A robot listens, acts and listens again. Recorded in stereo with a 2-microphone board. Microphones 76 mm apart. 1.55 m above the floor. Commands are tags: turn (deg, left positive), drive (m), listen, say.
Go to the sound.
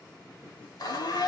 <turn deg="65"/>
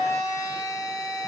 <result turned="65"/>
<turn deg="45"/>
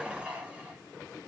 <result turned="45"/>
<turn deg="-15"/>
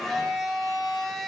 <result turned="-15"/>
<drive m="1.0"/>
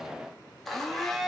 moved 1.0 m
<drive m="1.0"/>
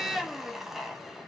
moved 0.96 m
<drive m="1.0"/>
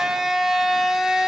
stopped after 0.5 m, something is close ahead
<say>I am next to the blender.</say>